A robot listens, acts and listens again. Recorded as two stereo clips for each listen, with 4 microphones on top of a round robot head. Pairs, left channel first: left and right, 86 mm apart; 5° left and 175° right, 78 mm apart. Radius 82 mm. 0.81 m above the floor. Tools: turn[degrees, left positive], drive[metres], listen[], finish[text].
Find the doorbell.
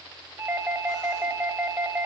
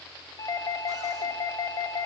Thought: The doorbell: 40° right.
Action: turn[-40]
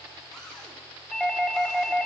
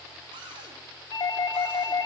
Action: finish[Found it: a doorbell, straight ahead, 1 to 2 m away.]